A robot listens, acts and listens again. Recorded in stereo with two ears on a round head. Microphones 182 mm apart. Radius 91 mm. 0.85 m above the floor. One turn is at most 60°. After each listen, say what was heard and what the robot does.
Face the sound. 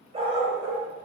The dog barking: about 20° right or 160° right. Turn 20° right.
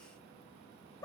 So it is at 20° left. Turn 20° left.
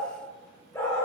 The dog barking is now 15° left. Turn 15° left.
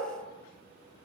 Keep listening.
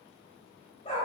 The dog barking is now 30° left. Turn 30° left.
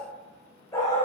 The dog barking is now 15° left. Turn 15° left.
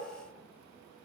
Keep listening.
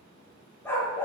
The dog barking is now 10° left. Turn 10° left.
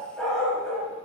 Found it: a dog barking, straight ahead, 2 to 4 m away.